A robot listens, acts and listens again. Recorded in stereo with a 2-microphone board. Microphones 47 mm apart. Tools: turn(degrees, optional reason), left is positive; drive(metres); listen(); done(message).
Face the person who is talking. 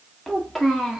turn(degrees=30)
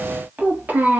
turn(degrees=-40, reason="So it is at 40° right.")
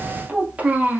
turn(degrees=-40, reason="The child speaking is now 40° right.")
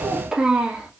turn(degrees=-20, reason="The child speaking is now 20° right.")
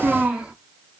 turn(degrees=-20, reason="The child speaking is now 20° right.")
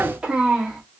turn(degrees=-15, reason="The child speaking is now 15° right.")
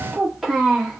done("Found it: a child speaking, straight ahead.")